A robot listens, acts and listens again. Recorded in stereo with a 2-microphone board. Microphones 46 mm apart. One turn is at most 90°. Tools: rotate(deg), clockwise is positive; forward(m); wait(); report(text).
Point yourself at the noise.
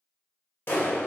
rotate(-55)
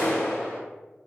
rotate(-15)
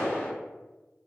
report("Facing the clap, 1 to 2 m away.")